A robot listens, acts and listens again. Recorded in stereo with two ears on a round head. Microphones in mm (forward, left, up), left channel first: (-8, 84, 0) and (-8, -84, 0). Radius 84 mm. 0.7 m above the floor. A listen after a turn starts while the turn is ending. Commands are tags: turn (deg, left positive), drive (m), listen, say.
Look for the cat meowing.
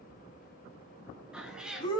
<turn deg="-30"/>
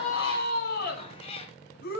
<turn deg="30"/>
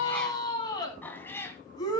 <turn deg="15"/>
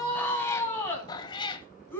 <turn deg="25"/>
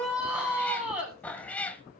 <turn deg="10"/>
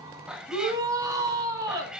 <say>Facing the cat meowing, 1 to 2 m away.</say>